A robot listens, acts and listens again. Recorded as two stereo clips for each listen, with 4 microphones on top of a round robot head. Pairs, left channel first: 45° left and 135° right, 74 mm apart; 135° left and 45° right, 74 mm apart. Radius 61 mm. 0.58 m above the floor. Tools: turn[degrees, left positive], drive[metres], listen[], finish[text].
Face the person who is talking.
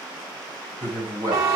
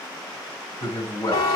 Thought: The man speaking: 115° left.
Action: turn[115]
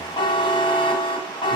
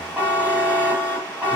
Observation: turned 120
Action: listen[]
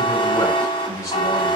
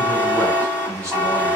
Action: finish[Found it: a man speaking, straight ahead, 2 to 4 m away.]